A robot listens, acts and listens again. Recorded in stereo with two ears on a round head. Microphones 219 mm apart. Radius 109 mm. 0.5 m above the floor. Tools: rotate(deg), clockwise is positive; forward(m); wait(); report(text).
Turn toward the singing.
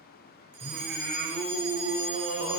rotate(45)
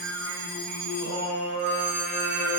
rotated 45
rotate(70)
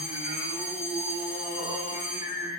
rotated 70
rotate(15)
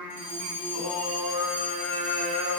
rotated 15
report("Facing the singing, over 4 m away.")